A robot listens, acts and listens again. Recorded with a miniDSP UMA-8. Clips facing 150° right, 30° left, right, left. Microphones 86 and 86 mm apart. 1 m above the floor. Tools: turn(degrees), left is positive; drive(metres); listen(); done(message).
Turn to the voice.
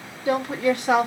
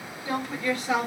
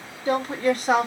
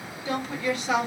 turn(degrees=-135)
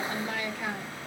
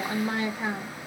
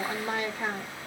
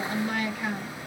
turn(degrees=-35)
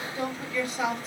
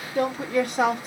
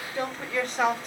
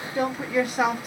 turn(degrees=10)
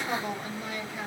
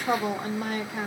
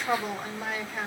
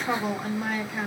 done("Found it: a woman speaking, straight ahead.")